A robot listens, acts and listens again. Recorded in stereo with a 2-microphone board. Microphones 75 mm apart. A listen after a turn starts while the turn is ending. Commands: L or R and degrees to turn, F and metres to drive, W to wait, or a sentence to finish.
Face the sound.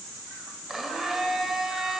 R30
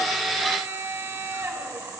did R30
R145
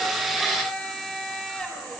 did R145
Facing the blender, 2 to 4 m away.